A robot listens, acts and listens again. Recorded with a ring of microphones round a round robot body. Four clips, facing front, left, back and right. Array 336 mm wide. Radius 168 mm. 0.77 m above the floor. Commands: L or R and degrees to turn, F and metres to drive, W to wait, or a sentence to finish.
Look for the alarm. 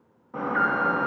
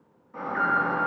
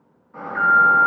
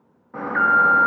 R50
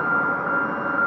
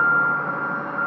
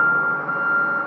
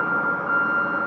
R15
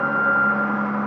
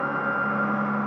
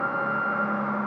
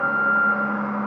Facing the alarm.